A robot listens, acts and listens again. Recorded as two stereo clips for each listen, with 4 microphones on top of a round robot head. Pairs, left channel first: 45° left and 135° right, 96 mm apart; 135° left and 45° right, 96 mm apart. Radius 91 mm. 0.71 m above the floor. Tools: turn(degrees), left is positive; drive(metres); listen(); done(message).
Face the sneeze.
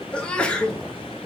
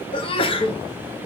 turn(degrees=120)
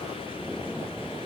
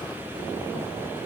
done("I heard a sneeze from this way, but can't make it out now.")